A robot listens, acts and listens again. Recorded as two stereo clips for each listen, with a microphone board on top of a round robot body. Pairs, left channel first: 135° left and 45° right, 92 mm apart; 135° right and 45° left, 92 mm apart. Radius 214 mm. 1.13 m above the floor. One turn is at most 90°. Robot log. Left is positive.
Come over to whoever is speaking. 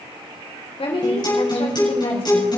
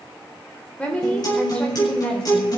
note: The woman speaking: 145° left.
cmd yaw +90
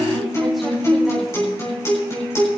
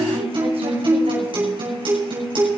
note: Nothing new. It was at 55° left.
cmd yaw +55
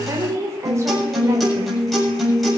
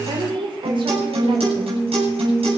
note: The woman speaking is now 15° left.
cmd yaw +15
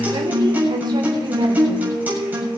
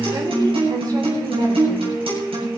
cmd idle
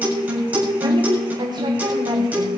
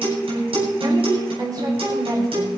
cmd fwd 1.0
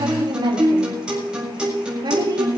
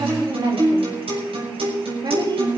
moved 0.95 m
cmd fwd 1.0
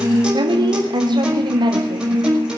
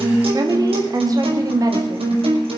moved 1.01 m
cmd fwd 1.0
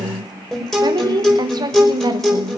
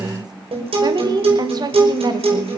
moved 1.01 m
cmd fwd 1.0
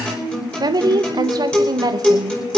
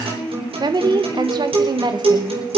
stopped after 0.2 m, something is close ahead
end: I am next to the woman speaking.